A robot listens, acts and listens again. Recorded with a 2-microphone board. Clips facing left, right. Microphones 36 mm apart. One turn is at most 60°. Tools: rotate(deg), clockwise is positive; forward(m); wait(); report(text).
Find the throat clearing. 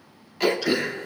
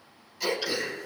rotate(-50)
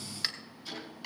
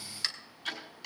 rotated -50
rotate(-10)
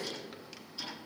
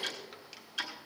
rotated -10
wait()
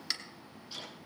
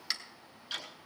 report("Found it: throat clearing, straight ahead.")